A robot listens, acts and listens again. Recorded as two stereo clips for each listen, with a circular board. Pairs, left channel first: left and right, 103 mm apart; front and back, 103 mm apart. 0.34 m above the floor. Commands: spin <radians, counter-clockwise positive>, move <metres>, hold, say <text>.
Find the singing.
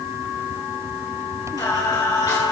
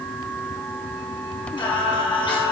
spin 0.70
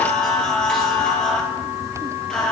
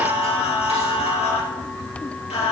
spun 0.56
say Found it: singing, straight ahead.